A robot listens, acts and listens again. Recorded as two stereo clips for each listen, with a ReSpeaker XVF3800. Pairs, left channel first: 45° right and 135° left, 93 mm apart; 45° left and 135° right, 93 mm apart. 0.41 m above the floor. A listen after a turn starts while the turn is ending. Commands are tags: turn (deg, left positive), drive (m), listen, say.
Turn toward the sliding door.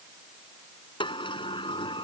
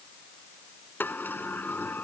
<turn deg="-20"/>
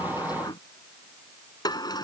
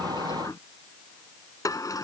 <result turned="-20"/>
<say>Found it: a sliding door, straight ahead.</say>